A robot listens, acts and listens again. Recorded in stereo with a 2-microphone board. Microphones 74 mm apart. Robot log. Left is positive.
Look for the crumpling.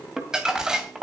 cmd yaw -30
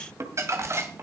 note: So it is at 140° right.
cmd yaw -140
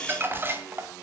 note: The crumpling is now 30° right.
cmd yaw -30
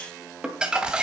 note: The crumpling is now 10° right.
cmd yaw -10
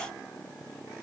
cmd idle
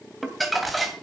end: Found it: crumpling, straight ahead, 2 to 4 m away.